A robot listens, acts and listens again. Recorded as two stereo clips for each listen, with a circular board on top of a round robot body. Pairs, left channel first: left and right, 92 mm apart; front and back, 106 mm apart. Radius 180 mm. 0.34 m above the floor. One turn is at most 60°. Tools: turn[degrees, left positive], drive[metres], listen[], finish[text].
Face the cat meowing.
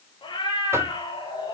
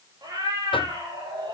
Thought: The cat meowing: 125° left.
Action: turn[60]
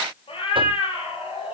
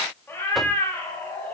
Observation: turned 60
Thought: The cat meowing is now 70° left.
Action: turn[60]
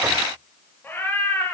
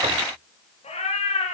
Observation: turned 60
Thought: The cat meowing is now 20° left.
Action: turn[20]
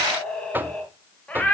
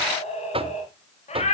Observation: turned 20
Thought: The cat meowing is now 15° left.
Action: turn[15]
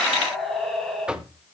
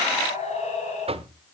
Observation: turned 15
Action: finish[Facing the cat meowing.]